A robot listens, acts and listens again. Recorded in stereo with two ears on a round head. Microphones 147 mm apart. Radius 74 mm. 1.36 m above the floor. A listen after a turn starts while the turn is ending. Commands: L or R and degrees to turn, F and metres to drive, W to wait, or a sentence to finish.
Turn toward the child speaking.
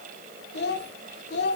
L70
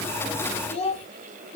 L40
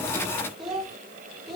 Facing the child speaking, 2 to 4 m away.